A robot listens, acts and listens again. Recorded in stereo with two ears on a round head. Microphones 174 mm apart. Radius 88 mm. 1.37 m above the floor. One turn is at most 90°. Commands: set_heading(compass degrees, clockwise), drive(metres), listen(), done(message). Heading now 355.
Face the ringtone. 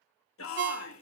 set_heading(55)
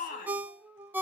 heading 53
set_heading(63)
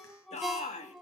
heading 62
done("Found it: a ringtone, straight ahead, under 1 m away.")